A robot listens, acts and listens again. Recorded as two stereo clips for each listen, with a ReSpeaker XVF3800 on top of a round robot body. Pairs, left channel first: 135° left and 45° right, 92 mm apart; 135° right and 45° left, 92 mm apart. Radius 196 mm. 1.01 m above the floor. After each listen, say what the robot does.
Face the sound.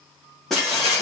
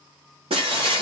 Turn 50° left.
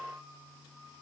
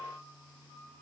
I heard breaking glass from this way, but can't make it out now.